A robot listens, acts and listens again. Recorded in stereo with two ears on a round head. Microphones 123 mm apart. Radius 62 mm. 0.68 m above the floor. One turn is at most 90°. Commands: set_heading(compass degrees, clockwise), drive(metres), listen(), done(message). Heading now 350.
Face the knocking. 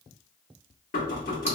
set_heading(285)
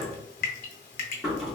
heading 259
done("Found it: knocking, straight ahead, 1 to 2 m away.")